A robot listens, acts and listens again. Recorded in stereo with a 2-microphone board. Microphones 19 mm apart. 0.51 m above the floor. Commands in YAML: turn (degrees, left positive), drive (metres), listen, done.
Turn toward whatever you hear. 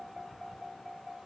listen: true
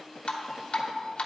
turn: 60
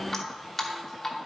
turn: 10
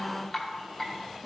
done: "Found it: dripping, straight ahead, 1 to 2 m away."